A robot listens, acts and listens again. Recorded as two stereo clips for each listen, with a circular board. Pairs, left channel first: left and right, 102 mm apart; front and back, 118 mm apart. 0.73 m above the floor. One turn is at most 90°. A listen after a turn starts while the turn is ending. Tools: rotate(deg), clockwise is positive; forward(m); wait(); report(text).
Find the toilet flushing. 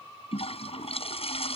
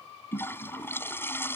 rotate(-70)
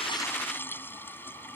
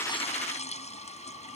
rotate(-20)
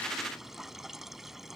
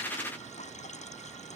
report("Found it: a toilet flushing, straight ahead.")